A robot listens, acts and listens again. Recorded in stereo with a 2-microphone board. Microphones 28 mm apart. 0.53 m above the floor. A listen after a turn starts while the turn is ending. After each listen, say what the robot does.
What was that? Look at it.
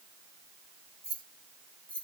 Turn 35° left.
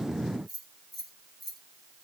Facing the keys jangling.